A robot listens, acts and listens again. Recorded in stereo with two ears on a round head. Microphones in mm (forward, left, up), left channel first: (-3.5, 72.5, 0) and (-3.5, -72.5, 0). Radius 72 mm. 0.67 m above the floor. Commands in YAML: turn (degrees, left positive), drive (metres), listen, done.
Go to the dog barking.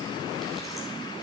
listen: true
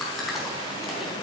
listen: true
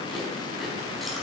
done: "I can't make out a dog barking to turn to."